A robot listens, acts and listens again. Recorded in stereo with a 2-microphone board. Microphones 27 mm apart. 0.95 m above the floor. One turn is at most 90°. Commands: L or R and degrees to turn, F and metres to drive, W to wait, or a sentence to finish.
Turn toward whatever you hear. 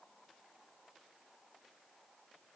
W
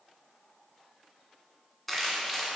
L30
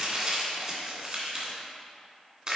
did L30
R30
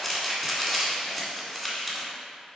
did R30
Facing the crumpling.